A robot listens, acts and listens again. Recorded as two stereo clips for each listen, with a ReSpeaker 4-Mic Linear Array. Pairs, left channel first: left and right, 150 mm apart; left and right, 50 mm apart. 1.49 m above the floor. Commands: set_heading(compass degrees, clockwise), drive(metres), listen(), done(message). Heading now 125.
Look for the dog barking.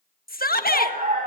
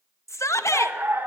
set_heading(185)
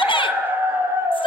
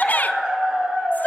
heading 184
set_heading(204)
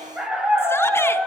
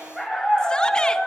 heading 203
set_heading(213)
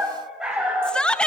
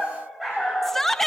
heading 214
set_heading(224)
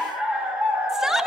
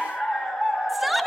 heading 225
done("Facing the dog barking.")